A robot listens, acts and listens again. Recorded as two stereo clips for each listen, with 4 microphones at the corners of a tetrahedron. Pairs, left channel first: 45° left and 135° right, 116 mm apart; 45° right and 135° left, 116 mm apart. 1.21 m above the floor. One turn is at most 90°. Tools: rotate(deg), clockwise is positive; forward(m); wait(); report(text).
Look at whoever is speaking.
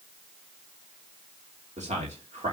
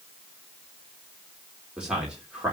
rotate(90)
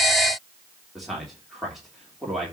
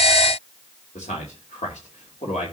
rotate(45)
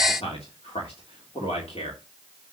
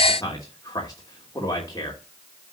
rotate(-15)
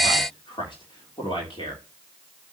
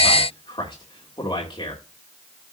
report("Facing the man speaking.")